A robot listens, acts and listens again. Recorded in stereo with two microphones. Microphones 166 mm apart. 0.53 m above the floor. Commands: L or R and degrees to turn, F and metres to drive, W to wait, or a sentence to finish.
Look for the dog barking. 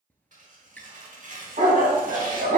R60
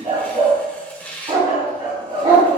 R25
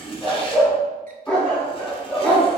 Facing the dog barking.